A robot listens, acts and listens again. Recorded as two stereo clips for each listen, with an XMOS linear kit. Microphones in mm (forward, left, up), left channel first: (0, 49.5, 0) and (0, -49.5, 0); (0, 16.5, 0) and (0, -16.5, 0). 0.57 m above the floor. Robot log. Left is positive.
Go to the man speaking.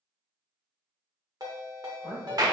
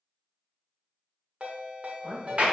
cmd yaw +30
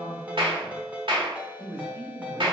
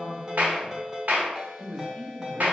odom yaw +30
note: So it is at 30° right.
cmd yaw -30
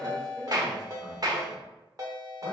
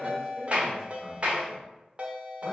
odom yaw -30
cmd fwd 1.0
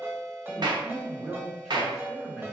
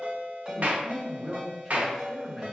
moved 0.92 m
cmd fwd 1.0
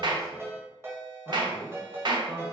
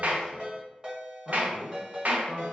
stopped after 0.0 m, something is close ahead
end: I am next to the man speaking.